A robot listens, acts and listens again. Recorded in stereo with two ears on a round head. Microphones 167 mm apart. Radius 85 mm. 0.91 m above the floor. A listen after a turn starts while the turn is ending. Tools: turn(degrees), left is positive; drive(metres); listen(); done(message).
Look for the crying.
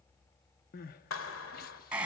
turn(degrees=55)
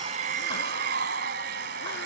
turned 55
listen()
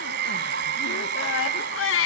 turn(degrees=70)
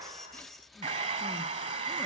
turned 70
listen()
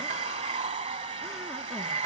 listen()
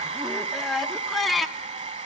done("Facing the crying, under 1 m away.")